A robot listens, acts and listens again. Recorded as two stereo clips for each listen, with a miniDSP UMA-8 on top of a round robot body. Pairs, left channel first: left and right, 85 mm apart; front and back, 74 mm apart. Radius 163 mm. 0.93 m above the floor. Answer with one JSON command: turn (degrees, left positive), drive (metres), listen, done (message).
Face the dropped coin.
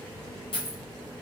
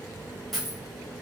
{"turn": 90}
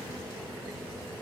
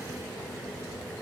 {"done": "Facing where the dropped coin came from. I can't hear it now."}